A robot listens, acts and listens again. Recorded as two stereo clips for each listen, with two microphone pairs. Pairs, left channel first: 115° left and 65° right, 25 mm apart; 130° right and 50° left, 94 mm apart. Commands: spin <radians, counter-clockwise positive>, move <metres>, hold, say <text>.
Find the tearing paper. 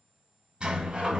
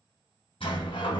hold
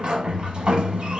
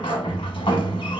hold
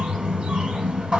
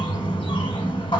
say I can't make out tearing paper, only a sliding door.